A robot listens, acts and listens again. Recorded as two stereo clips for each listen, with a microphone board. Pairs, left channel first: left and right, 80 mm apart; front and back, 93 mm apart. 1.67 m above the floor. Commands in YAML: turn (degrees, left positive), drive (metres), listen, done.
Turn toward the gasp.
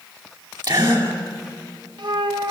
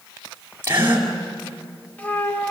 turn: -115
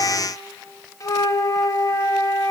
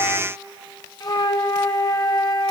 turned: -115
done: "Facing where the gasp came from. I can't hear it now."